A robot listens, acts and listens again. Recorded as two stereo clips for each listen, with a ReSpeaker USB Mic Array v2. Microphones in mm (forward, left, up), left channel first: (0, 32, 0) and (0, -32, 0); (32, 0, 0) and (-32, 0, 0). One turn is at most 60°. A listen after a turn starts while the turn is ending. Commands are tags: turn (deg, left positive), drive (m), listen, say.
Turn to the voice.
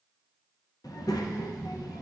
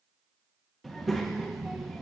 <turn deg="60"/>
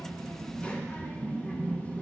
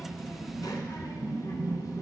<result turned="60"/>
<turn deg="20"/>
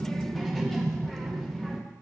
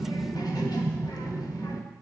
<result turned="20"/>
<say>Found it: a child speaking, straight ahead.</say>